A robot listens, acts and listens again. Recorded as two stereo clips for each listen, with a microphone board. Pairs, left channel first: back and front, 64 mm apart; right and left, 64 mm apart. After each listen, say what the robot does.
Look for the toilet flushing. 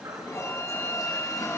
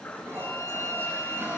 Turn 140° left.
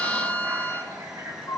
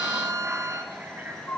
Turn 25° left.
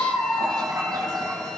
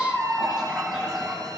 Turn 10° left.
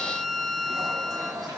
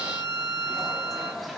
Found it: a toilet flushing, straight ahead, over 4 m away.